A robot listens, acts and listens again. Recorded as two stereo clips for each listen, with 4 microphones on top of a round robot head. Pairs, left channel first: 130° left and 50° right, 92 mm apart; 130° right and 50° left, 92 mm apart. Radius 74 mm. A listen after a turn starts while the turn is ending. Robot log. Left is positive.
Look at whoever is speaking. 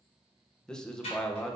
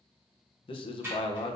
note: The man speaking: 145° right.
cmd yaw -145
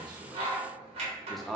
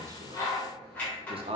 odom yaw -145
note: The man speaking is now 45° left.
cmd yaw +45
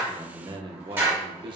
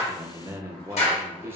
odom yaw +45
note: The man speaking is now 20° right.
cmd yaw -20
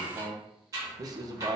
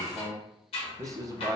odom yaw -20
end: Facing the man speaking.